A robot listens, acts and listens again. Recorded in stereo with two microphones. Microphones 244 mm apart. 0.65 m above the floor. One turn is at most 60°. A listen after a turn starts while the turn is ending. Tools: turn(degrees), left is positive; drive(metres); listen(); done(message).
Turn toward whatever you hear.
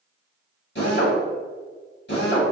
turn(degrees=50)
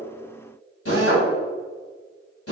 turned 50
turn(degrees=60)
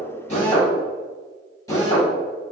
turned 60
turn(degrees=15)
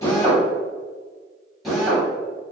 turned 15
done("Facing the drill.")